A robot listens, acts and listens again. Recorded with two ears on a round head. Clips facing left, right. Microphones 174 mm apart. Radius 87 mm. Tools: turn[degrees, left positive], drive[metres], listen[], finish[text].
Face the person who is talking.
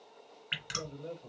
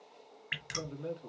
Thought: The man speaking: about 70° right or 110° right.
Action: turn[-70]
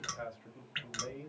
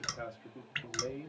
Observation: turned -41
Thought: So it is at 45° right.
Action: turn[-45]
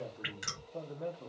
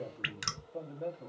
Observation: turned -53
Thought: The man speaking is now 10° left.
Action: turn[10]
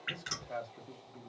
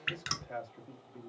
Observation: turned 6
Action: finish[Found it: a man speaking, straight ahead.]